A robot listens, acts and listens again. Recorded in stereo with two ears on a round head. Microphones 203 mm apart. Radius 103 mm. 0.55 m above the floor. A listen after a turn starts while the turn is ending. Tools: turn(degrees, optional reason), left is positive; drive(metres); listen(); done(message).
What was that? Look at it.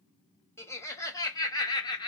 turn(degrees=20, reason="The laughter: about 20° left or 160° left.")
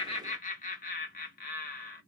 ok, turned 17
turn(degrees=40, reason="The laughter: about 40° left or 140° left.")
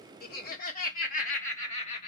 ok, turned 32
turn(degrees=30, reason="The laughter: about 30° left or 150° left.")
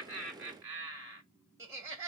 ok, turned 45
turn(degrees=-10, reason="So it is at 10° right.")
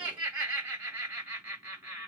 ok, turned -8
done("Facing the laughter.")